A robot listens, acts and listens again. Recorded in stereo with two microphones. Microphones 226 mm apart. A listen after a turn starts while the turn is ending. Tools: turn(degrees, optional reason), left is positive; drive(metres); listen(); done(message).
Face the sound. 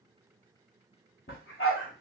turn(degrees=70, reason="The dog barking: about 70° left or 110° left.")
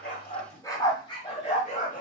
turn(degrees=35, reason="So it is at 35° left.")
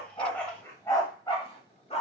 turn(degrees=30, reason="The dog barking is now 30° left.")
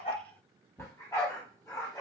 turn(degrees=15, reason="The dog barking is now 15° left.")
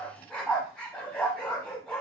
done("Found it: a dog barking, straight ahead.")